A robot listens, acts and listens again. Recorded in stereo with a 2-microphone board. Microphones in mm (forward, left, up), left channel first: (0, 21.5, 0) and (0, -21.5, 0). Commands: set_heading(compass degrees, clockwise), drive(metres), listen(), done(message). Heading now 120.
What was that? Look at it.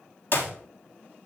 set_heading(65)
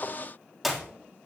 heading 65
done("Found it: a clap, straight ahead.")